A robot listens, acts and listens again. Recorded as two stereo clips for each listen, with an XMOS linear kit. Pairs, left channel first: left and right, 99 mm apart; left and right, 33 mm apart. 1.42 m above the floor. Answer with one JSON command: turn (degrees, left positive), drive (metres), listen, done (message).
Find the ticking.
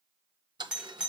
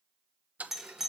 {"turn": -55}
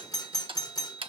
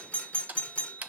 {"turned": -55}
{"turn": -70}
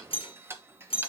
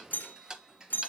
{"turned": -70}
{"turn": -25}
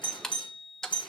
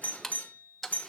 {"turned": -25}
{"done": "Facing the ticking."}